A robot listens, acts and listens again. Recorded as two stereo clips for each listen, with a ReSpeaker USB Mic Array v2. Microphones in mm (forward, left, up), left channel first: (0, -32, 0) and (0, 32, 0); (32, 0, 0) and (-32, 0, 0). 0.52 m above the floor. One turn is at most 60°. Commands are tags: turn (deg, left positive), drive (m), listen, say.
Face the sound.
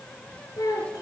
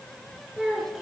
<turn deg="-60"/>
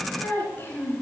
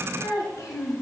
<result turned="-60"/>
<turn deg="-35"/>
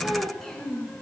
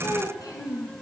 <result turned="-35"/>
<say>Facing the child speaking, 2 to 4 m away.</say>